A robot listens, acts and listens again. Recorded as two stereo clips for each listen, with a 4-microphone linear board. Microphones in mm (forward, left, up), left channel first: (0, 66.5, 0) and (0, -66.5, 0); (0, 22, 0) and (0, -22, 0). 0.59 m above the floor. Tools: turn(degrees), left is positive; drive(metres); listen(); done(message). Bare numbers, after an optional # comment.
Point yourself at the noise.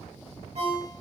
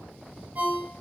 # The ringtone: about 55° right or 125° right.
turn(-55)
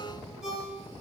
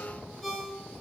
done("Found it: a ringtone, straight ahead.")